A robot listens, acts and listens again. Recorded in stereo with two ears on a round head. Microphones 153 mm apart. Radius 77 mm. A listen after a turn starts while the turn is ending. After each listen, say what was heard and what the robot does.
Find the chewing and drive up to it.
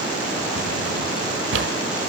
Keep listening.
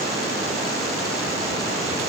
Keep listening.
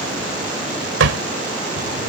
I can't make out chewing to turn to.